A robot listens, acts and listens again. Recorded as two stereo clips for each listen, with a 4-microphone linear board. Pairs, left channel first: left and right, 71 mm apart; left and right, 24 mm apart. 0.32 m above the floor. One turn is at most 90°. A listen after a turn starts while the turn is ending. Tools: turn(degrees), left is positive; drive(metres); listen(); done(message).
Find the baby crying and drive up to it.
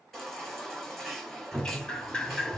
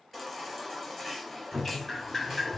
turn(degrees=30)
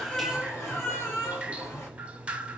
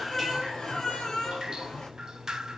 turn(degrees=90)
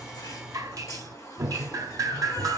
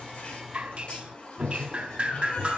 turn(degrees=45)
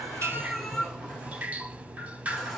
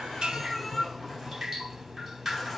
drive(metres=1.0)
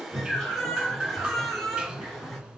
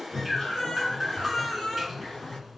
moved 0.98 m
drive(metres=1.0)
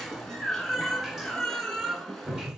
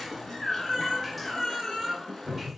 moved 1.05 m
drive(metres=1.0)
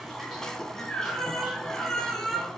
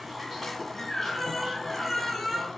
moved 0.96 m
drive(metres=1.0)
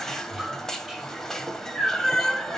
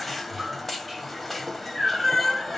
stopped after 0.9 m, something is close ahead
done("I am next to the baby crying.")